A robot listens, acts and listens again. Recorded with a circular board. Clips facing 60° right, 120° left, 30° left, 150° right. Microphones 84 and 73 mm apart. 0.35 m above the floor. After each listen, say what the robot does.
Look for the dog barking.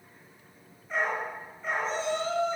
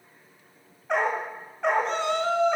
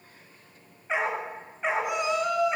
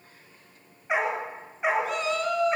Turn 130° left.
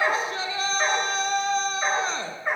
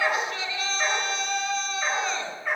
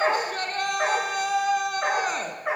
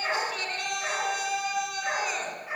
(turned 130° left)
Turn 10° left.
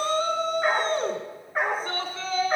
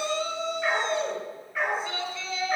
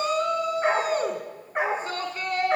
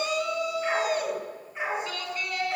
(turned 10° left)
Facing the dog barking.